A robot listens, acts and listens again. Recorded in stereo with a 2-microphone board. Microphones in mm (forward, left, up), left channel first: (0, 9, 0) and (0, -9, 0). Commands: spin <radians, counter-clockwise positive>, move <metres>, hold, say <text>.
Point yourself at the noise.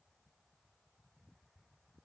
hold
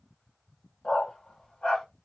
spin 1.57
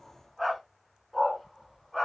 spin -0.26
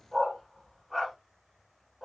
say Found it: a dog barking, straight ahead, 2 to 4 m away.